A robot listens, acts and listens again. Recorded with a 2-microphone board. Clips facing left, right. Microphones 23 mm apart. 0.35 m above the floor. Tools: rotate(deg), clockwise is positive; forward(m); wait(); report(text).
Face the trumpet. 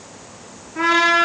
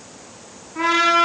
rotate(-30)
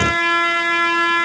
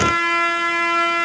rotate(-155)
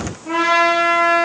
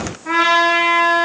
rotate(50)
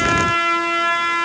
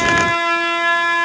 rotate(20)
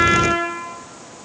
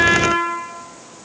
report("Facing the trumpet.")